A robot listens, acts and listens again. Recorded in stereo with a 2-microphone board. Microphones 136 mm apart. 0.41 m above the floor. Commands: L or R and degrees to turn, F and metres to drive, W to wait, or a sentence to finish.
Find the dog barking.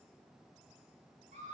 W
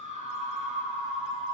W
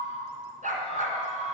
R90
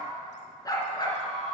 L30
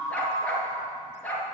L10
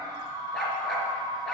Found it: a dog barking, straight ahead, 1 to 2 m away.